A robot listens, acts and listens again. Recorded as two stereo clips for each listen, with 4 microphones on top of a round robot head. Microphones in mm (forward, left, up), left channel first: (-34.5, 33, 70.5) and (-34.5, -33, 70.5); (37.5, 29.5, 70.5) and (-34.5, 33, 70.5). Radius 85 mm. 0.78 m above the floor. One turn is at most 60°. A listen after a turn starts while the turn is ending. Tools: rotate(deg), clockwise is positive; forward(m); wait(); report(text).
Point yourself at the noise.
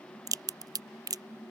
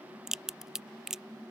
rotate(60)
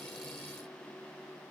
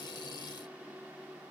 rotate(40)
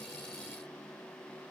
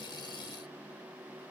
report("I heard a crack from this way, but can't make it out now.")